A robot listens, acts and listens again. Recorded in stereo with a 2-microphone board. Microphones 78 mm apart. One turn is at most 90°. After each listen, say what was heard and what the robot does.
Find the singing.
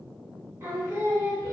The singing: about 35° right or 145° right. Turn 35° right.
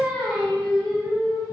Facing the singing, 1 to 2 m away.